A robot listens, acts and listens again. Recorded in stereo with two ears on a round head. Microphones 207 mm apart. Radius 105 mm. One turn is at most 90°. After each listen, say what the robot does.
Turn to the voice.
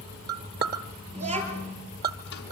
Turn 30° right.
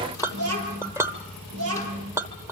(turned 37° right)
Turn 90° right.
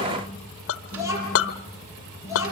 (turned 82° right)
Turn 15° right.
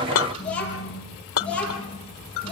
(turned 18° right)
Found it: a child speaking, straight ahead, over 4 m away.